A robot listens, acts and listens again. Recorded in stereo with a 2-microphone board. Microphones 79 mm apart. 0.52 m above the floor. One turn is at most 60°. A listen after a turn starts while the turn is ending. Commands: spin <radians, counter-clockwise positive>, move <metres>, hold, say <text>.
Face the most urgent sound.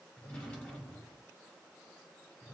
hold
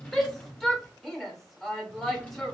spin 0.52
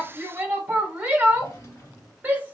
spin -0.44
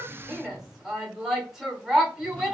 say Facing the shout.